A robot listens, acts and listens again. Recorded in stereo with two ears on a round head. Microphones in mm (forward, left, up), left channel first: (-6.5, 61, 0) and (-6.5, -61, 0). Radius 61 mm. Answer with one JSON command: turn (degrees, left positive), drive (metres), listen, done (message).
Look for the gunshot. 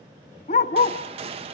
{"turn": -40}
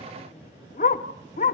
{"listen": true}
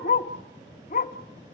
{"done": "I heard a gunshot, but can't make it out now. It was about straight ahead or 100° right."}